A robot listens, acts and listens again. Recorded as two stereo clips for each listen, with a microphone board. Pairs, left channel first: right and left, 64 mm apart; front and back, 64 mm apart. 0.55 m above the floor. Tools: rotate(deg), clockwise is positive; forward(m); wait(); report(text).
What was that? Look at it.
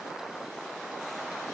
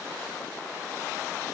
wait()
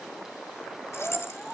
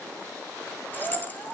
rotate(55)
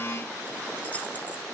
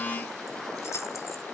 wait()
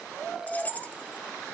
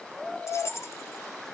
rotate(30)
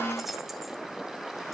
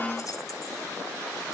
wait()
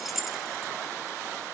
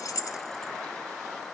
report("Found it: keys jangling, straight ahead, under 1 m away.")